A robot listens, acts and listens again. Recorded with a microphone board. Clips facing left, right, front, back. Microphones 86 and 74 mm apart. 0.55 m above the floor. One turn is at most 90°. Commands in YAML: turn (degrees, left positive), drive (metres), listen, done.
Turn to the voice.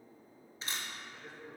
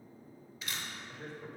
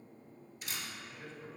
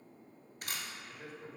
turn: -90
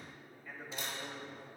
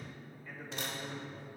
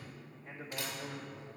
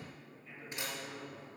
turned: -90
done: "Facing the man speaking, 1 to 2 m away."